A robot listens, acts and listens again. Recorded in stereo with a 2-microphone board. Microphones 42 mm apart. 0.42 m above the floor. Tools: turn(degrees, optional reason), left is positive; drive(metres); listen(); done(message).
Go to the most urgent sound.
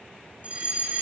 turn(degrees=-35, reason="The fire alarm: about 35° right or 145° right.")
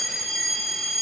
drive(metres=1.0)
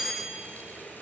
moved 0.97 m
turn(degrees=-10, reason="The fire alarm is now 10° right.")
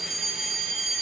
drive(metres=1.0)
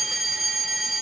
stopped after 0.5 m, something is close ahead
done("I am next to the fire alarm.")